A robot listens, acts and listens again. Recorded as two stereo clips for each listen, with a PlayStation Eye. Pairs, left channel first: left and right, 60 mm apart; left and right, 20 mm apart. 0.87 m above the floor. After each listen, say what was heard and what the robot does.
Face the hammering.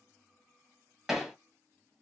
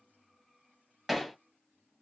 Turn 30° right.
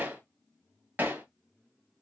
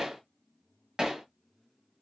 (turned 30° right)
So it is at 145° right. Turn 145° right.
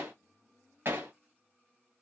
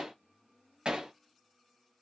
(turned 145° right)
The hammering is now 45° right. Turn 45° right.
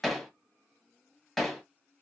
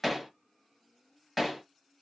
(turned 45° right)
Facing the hammering, 2 to 4 m away.